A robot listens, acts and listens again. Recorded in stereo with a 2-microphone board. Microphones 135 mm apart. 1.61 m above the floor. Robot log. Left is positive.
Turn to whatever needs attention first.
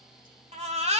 note: The baby crying: about 55° right or 125° right.
cmd yaw -55
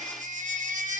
note: So it is at 70° right.
cmd yaw -70
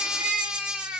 end: Found it: a baby crying, straight ahead.